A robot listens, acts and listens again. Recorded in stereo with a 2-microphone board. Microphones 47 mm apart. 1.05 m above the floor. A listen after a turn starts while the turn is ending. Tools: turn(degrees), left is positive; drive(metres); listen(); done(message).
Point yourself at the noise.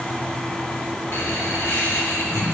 turn(degrees=90)
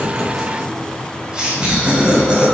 turn(degrees=-20)
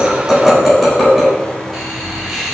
done("Facing the laughter, over 4 m away.")